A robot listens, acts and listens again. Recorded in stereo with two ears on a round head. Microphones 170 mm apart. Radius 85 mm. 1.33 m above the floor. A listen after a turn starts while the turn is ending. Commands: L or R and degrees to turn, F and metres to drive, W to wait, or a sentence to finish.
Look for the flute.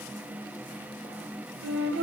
R65
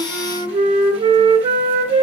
R35
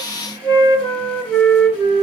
L10
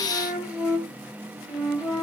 Facing the flute.